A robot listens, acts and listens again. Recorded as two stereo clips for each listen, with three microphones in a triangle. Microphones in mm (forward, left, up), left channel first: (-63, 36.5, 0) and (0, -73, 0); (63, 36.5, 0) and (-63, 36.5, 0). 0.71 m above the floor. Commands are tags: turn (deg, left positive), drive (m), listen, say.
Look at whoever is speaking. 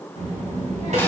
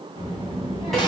<turn deg="-45"/>
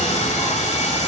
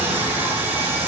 <listen/>
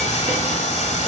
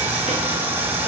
<turn deg="15"/>
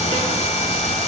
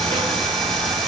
<say>Facing the child speaking, 2 to 4 m away.</say>